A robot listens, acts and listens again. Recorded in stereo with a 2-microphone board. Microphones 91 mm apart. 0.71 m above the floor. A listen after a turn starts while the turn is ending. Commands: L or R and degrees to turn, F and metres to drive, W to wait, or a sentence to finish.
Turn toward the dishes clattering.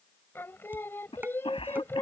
R20
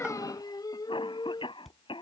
Facing the dishes clattering.